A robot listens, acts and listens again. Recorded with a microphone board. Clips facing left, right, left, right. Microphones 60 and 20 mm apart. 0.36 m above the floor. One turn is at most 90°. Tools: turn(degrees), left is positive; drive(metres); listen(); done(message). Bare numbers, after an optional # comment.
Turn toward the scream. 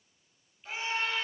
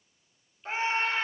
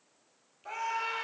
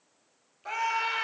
# The scream: about 40° right or 140° right.
turn(-40)
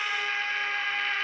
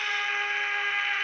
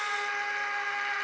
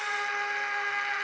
# So it is at 10° right.
turn(-10)
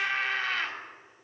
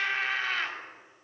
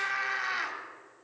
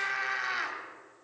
done("Facing the scream.")